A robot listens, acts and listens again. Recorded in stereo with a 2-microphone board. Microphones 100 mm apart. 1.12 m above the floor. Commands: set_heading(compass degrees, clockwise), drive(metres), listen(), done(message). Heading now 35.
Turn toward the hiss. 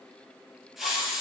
set_heading(5)
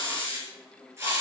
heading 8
set_heading(38)
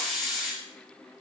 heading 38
done("Found it: a hiss, straight ahead, over 4 m away.")